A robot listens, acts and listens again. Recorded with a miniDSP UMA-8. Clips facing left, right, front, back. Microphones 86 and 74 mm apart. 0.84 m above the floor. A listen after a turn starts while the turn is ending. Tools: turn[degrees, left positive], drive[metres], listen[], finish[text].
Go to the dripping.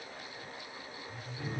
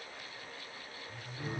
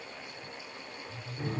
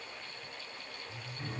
Action: listen[]
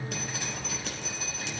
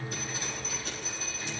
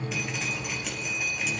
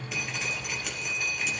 Thought: The dripping: 90° left.
Action: turn[90]
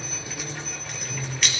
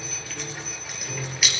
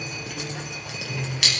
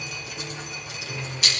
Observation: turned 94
Action: drive[1.0]
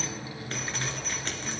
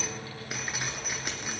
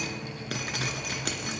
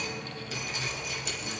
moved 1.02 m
Thought: The dripping is now 10° right.
Action: turn[-10]
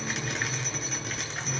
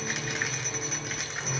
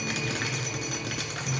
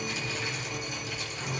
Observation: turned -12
Action: listen[]
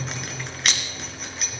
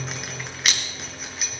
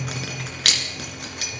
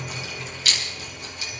Action: drive[1.0]
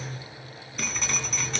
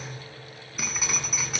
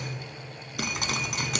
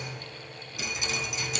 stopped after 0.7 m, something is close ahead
Action: finish[Arrived at the dripping, straight ahead.]